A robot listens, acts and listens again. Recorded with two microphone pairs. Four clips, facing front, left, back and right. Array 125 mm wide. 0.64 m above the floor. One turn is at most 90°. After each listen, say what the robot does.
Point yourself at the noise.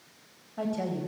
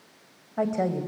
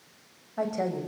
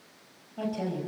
Turn 90° left.
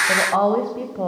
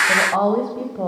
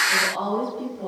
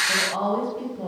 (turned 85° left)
Turn 40° left.
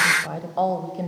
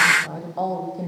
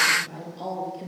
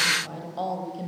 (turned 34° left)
Turn 15° left.
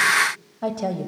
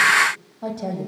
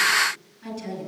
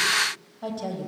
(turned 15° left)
Found it: a woman speaking, straight ahead, over 4 m away.